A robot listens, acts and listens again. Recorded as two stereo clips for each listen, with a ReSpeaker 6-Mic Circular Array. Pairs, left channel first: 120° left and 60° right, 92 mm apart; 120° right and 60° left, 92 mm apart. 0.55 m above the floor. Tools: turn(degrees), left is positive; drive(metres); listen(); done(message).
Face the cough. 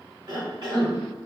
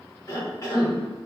turn(degrees=-70)
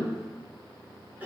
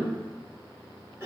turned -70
done("Facing the cough.")